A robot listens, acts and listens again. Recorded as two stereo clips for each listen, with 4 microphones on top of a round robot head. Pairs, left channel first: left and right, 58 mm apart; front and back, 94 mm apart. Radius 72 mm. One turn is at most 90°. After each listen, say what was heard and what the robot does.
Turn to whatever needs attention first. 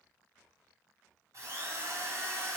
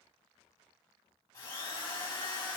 Keep listening.
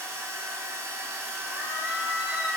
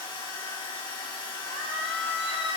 The scream: 160° right. Turn 90° right.
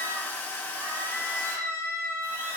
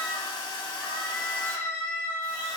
The scream is now 70° right. Turn 70° right.
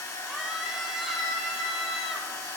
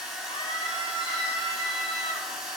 The scream is now 10° right. Turn 10° right.
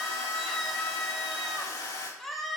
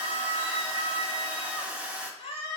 Facing the scream.